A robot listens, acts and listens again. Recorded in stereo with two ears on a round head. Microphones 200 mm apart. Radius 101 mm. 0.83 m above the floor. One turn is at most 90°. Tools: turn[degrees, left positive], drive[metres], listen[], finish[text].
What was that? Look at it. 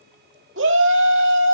Thought: The shout: about 55° right or 125° right.
Action: turn[-55]
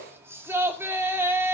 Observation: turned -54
Thought: So it is at 15° right.
Action: turn[-15]
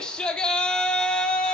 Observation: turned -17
Action: finish[Found it: a shout, straight ahead, 2 to 4 m away.]